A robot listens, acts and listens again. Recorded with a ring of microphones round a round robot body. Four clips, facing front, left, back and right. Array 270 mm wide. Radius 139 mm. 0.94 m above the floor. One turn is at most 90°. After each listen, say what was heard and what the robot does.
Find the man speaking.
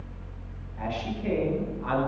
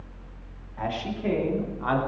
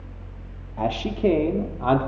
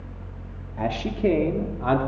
The man speaking: 145° right. Turn 90° right.
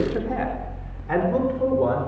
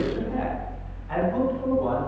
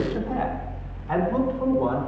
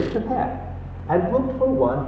The man speaking is now 70° right. Turn 70° right.
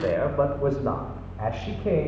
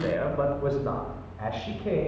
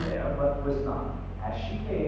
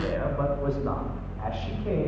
Keep listening.
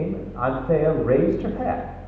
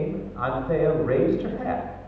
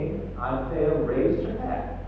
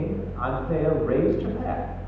The man speaking is now 15° left. Turn 15° left.
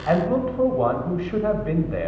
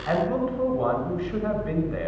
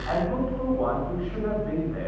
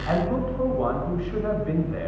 Facing the man speaking.